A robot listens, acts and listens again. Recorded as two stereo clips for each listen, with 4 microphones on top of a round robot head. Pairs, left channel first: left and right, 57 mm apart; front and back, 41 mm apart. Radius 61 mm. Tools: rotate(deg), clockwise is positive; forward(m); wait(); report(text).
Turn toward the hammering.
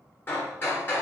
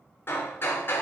rotate(-30)
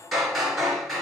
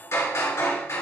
report("Facing the hammering.")